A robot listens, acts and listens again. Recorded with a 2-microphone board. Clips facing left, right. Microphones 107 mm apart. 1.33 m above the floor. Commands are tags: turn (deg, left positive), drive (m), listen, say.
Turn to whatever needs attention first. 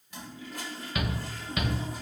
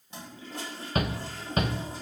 <turn deg="-40"/>
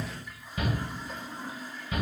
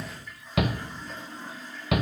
<turn deg="-100"/>
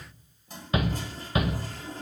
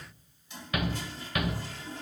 <turn deg="25"/>
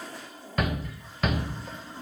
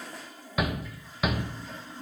<say>Found it: a shout, straight ahead, under 1 m away.</say>